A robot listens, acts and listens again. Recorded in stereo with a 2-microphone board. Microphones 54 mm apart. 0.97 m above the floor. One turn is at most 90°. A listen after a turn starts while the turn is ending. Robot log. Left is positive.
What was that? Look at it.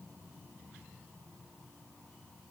cmd idle
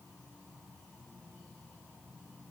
cmd idle
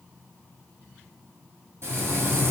note: The frying: about 50° right or 130° right.
cmd yaw -50
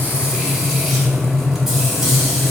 note: So it is at 10° right.
cmd yaw -10
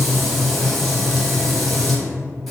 end: Facing the frying, under 1 m away.